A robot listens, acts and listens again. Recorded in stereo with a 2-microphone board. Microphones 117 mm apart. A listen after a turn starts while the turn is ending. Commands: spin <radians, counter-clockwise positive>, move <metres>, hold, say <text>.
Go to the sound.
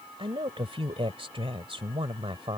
spin -0.87
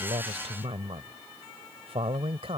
spin -1.22
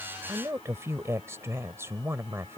spin -0.44
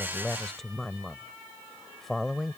move 1.0
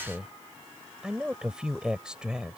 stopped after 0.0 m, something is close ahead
spin -0.17
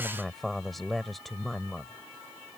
say Something is in my way. I am facing the woman speaking but have not reached it.